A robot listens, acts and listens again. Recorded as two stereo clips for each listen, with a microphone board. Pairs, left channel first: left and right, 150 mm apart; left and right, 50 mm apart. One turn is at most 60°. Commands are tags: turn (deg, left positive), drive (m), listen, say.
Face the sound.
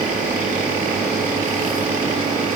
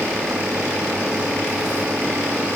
<listen/>
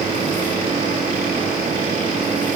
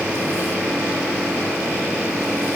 <listen/>
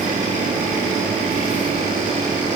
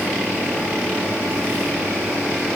<say>I can't make out anything.</say>